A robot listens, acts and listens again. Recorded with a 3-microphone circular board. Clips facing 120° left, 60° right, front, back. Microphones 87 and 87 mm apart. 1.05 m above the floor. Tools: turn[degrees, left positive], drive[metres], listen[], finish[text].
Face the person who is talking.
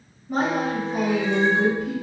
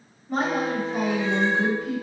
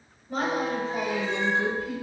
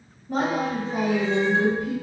Thought: The woman speaking: 155° right.
Action: turn[-155]
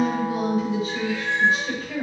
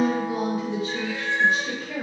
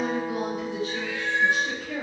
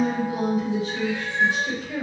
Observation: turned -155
Thought: The woman speaking is now 40° right.
Action: turn[-40]
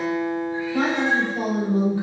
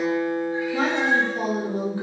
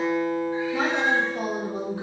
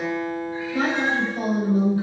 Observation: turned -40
Action: finish[Facing the woman speaking, 1 to 2 m away.]